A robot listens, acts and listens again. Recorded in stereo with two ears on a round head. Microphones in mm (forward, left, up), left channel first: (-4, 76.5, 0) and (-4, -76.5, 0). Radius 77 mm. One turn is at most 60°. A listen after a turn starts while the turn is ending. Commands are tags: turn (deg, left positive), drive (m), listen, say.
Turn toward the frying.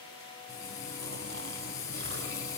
<turn deg="20"/>
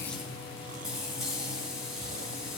<say>Facing the frying.</say>